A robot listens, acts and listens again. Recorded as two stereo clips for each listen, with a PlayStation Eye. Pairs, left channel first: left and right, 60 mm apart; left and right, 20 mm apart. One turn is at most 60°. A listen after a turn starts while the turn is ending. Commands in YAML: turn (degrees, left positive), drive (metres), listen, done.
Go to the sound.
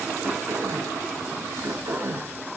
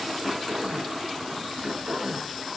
turn: -45
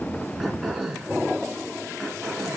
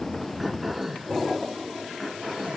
drive: 1.0
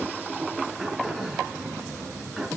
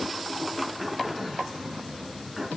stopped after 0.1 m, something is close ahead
done: "Blocked. The throat clearing is further on, straight ahead."